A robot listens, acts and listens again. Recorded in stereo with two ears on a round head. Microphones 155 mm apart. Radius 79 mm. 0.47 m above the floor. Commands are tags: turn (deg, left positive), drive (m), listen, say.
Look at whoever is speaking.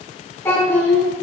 <turn deg="30"/>
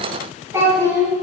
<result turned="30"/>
<turn deg="-15"/>
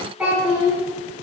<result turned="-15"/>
<say>Facing the child speaking, 2 to 4 m away.</say>